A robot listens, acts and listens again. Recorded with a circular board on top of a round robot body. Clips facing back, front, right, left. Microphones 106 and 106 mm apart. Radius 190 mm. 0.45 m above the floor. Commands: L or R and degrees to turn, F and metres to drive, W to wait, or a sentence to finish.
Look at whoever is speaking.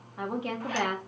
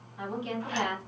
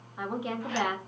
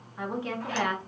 R170
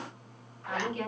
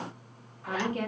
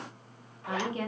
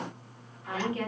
R25
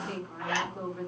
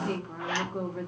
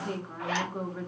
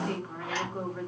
R15
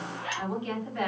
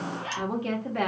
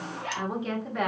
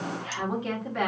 Found it: a woman speaking, straight ahead, 1 to 2 m away.